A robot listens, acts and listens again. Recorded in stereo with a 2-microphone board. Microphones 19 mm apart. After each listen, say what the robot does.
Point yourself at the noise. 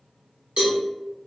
Turn 75° right.
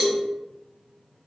Turn 15° right.
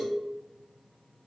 Found it: a cowbell, straight ahead.